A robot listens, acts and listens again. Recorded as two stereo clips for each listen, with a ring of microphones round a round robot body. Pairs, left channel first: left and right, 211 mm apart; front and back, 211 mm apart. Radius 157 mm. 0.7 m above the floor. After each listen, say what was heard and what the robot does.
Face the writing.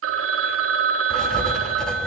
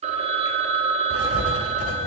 Facing the writing.